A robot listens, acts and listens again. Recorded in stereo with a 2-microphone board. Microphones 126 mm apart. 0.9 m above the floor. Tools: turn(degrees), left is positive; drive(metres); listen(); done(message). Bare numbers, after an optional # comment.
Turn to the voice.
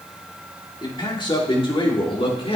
# The man speaking: about 50° left or 130° left.
turn(50)
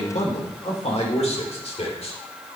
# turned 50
# So it is at 60° left.
turn(60)
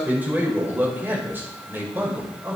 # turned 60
# The man speaking is now 15° right.
turn(-15)
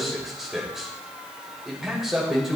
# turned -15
done("Found it: a man speaking, straight ahead, over 4 m away.")